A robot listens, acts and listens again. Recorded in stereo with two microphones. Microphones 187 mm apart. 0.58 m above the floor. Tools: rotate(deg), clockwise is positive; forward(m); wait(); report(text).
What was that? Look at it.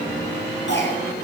rotate(-90)
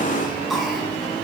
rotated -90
report("Found it: a cough, straight ahead.")